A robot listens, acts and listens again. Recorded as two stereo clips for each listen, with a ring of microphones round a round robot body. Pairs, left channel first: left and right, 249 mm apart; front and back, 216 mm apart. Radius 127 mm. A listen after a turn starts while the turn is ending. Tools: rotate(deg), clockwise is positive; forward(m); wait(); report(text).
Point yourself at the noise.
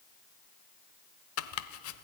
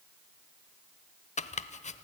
rotate(-60)
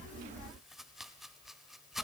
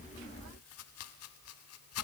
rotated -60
report("Facing the chopping, 1 to 2 m away.")